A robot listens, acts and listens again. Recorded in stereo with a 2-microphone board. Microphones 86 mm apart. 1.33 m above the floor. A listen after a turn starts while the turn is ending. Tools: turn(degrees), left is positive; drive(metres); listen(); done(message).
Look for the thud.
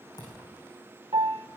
turn(degrees=50)
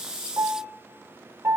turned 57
listen()
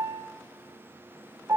done("I heard a thud, but can't make it out now. It was about 5° right or 70° left.")